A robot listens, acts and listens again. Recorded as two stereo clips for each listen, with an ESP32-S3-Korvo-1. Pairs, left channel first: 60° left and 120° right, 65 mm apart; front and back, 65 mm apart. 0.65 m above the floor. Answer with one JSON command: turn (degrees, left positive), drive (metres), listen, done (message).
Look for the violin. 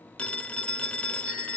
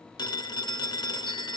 {"listen": true}
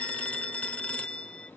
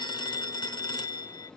{"listen": true}
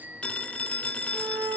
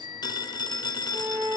{"turn": -125}
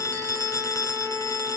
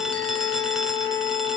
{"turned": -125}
{"turn": -20}
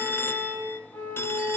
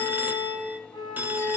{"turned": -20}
{"done": "Found it: a violin, straight ahead."}